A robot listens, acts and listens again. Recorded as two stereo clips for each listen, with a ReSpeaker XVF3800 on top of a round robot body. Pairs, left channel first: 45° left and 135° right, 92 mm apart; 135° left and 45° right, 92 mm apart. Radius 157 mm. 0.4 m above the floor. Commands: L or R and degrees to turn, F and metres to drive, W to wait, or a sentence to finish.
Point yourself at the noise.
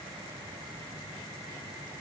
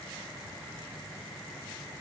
W
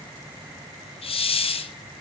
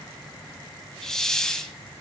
L50
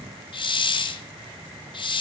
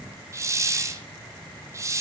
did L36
L15
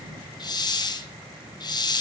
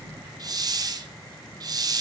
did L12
Facing the hiss, 1 to 2 m away.